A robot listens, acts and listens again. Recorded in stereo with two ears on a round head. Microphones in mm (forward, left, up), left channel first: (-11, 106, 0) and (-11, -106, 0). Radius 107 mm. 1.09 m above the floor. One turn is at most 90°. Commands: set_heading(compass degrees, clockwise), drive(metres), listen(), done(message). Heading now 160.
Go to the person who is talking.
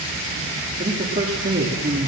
set_heading(190)
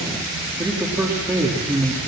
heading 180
set_heading(190)
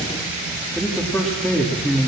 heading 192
drive(1.0)
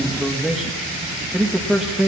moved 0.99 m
drive(1.0)
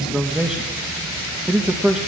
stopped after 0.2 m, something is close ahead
done("I am next to the man speaking.")